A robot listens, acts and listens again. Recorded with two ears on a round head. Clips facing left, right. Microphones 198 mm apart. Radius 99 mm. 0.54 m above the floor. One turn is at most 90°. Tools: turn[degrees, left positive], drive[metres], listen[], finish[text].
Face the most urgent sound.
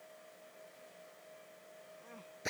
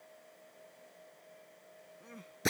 Thought: The crying: about 30° right or 150° right.
Action: turn[-30]
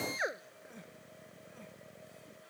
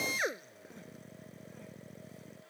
Action: listen[]
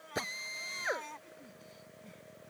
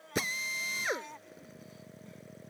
Action: finish[Facing the crying.]